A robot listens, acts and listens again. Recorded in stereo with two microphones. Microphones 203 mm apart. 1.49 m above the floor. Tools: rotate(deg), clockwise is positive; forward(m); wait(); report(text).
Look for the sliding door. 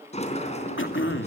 rotate(-35)
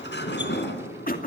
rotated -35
rotate(-115)
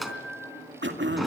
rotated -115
report("Found it: a sliding door, straight ahead.")